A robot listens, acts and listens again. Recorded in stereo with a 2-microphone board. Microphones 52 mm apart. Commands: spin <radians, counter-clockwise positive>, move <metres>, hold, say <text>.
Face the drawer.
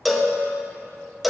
hold
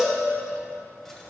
hold
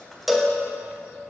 say I can't make out a drawer to turn to.